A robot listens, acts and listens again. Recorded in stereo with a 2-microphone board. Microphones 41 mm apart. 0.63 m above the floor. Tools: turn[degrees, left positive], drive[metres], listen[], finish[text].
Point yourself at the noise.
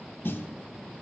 Thought: The snare drum: about 70° left or 110° left.
Action: turn[70]
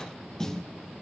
Thought: So it is at 10° left.
Action: turn[10]
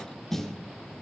Action: finish[Found it: a snare drum, straight ahead.]